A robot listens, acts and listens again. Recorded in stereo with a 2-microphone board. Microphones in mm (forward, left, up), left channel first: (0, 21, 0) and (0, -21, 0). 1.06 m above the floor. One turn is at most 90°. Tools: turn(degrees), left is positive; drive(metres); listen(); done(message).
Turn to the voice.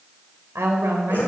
turn(degrees=-90)
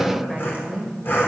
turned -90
done("Found it: a woman speaking, straight ahead.")